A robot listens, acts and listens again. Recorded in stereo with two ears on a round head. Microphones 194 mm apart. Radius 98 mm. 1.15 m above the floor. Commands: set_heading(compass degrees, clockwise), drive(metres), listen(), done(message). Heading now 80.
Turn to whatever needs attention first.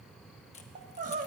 set_heading(120)
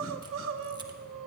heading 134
set_heading(219)
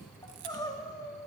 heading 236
set_heading(221)
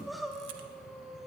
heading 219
done("Facing the crying.")